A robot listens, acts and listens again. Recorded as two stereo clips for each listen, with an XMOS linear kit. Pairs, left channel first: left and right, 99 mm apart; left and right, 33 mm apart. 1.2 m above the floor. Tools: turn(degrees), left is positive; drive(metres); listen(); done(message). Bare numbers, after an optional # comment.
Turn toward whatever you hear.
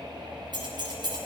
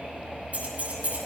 # The keys jangling: about 45° right or 135° right.
turn(-45)
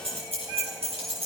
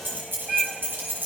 # So it is at 90° right.
turn(-90)
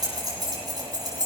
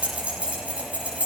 # The keys jangling is now 40° right.
turn(-40)
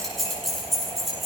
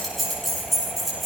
done("Facing the keys jangling.")